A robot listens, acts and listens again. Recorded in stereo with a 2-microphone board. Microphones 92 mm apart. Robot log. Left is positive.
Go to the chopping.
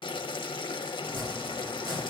note: The chopping: about 50° right or 130° right.
cmd yaw -50
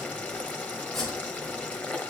cmd fwd 1.0
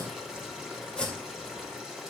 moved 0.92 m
note: The chopping is now 10° left.
cmd yaw +10
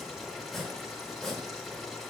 cmd fwd 1.0
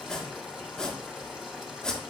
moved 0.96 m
note: The chopping is now 10° left.
cmd yaw +10
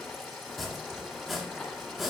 cmd fwd 1.0
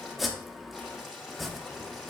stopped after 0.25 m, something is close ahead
end: I am next to the chopping.